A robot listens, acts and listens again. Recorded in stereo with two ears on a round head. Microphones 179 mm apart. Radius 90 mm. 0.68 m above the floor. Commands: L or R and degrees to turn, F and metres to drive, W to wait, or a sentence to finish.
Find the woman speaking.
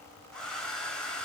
W
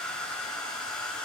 W
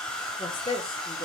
L25
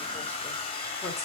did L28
W
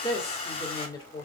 L25
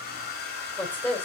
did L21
L10
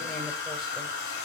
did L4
W
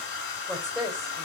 Found it: a woman speaking, straight ahead.